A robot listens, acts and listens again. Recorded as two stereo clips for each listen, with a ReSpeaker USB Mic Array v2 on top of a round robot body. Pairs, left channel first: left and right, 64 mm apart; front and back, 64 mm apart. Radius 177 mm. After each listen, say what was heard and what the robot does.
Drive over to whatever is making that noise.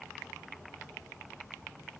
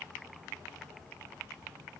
Keep listening.
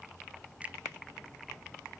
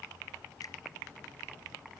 Keep listening.
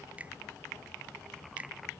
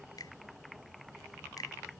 The finger snap: 20° right. Turn 20° right.
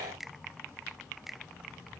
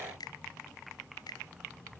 Drive 1.0 m forward.
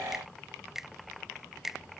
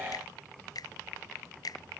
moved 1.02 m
Drive 1.0 m forward.
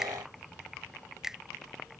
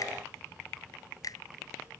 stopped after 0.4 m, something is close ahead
The finger snap is now 10° right. Turn 10° right.
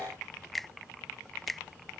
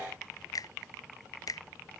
Arrived at the finger snap, straight ahead.